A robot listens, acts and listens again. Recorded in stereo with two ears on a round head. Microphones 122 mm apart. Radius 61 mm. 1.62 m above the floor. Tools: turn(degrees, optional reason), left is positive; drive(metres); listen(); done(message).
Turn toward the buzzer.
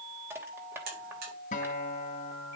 turn(degrees=-90)
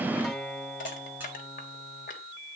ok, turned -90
listen()
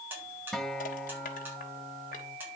turn(degrees=-15, reason="The buzzer is now 15° right.")
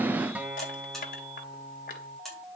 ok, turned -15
done("Found it: a buzzer, straight ahead.")